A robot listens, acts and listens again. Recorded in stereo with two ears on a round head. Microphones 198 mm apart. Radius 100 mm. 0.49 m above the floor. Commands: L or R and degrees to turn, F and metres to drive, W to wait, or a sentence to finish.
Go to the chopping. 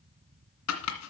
L90
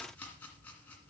F1.0
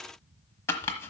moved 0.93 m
L10
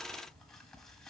W
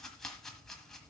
F1.0
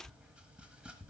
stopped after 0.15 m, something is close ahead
W
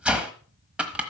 I am next to the chopping.